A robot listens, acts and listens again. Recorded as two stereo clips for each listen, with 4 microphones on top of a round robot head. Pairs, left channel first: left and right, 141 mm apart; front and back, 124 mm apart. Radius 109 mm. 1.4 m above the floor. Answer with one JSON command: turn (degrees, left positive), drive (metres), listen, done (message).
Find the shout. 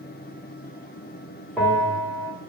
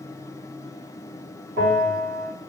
{"listen": true}
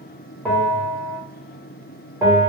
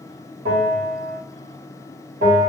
{"listen": true}
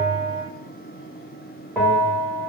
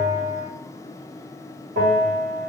{"done": "I can't make out a shout, only a bell."}